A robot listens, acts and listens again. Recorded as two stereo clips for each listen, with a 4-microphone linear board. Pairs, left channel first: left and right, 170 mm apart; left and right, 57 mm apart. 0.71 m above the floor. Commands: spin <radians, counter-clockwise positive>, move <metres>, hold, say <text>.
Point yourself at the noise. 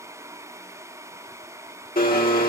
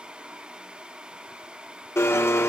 spin 1.05
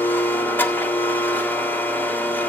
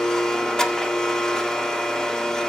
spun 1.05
spin 0.17
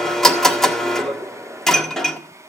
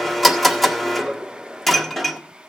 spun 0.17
say Facing the blender, 1 to 2 m away.